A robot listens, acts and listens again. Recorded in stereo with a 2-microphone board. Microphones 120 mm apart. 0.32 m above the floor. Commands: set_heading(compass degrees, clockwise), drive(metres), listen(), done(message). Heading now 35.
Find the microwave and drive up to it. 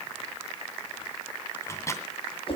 set_heading(10)
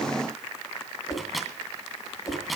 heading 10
drive(1.0)
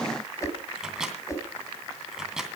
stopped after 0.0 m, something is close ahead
done("Something is in my way. I am facing the microwave but have not reached it.")